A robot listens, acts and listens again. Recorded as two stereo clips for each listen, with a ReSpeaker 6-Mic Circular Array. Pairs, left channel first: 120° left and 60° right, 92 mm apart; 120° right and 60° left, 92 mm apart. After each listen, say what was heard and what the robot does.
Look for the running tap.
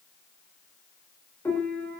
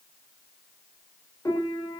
Keep listening.
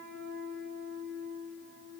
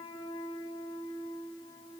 Keep listening.
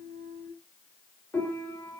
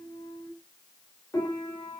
I can't make out a running tap to turn to.